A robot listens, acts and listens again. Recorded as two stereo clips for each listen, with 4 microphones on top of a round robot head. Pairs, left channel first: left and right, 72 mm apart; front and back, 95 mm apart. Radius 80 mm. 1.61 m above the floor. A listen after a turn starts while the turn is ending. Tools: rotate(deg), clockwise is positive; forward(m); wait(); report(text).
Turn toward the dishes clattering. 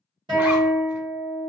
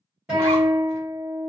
wait()
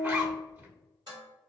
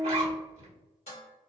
rotate(35)
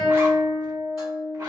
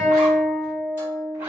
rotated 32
wait()
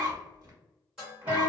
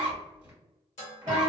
report("Facing the dishes clattering, 1 to 2 m away.")